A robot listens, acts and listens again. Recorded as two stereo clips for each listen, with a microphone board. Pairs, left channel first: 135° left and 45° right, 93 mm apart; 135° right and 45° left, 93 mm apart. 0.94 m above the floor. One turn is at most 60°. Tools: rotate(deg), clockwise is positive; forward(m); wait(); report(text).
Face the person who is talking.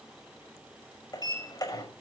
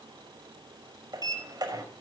wait()
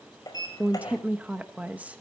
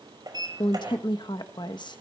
rotate(60)
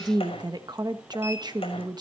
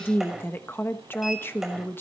rotate(60)
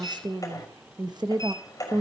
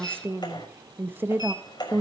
rotate(20)
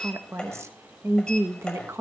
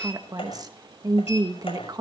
rotate(-10)
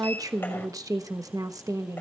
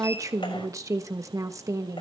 report("Facing the woman speaking, 1 to 2 m away.")